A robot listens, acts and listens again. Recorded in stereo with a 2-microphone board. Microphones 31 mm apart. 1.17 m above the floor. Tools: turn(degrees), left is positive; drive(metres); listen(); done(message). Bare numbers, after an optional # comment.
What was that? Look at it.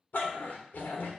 # The dog barking: about 70° left or 110° left.
turn(70)
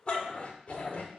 # So it is at 45° left.
turn(45)
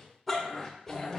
# The dog barking is now 10° left.
turn(10)
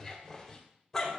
# The dog barking is now 15° left.
turn(15)
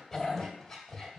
done("Found it: a dog barking, straight ahead, 2 to 4 m away.")